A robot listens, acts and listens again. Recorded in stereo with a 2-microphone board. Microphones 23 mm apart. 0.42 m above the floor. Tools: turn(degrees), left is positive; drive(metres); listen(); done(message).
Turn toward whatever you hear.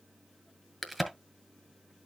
turn(degrees=30)
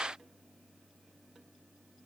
listen()
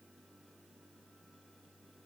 done("I heard a crack, but can't make it out now. It was about 25° right or 145° left.")